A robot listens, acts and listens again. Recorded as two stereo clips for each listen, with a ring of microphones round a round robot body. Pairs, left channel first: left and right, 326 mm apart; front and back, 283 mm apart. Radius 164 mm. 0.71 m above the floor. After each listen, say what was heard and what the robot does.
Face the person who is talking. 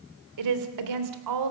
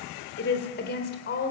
The woman speaking: 60° right. Turn 60° right.
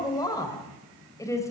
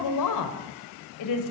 The woman speaking is now 10° left. Turn 10° left.
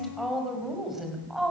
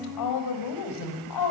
Facing the woman speaking, over 4 m away.